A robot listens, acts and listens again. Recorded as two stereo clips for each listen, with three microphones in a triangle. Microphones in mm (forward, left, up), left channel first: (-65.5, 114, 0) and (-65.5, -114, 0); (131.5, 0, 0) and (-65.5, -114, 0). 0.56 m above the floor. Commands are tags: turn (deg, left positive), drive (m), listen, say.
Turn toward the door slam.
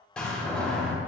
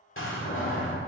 <say>Facing the door slam.</say>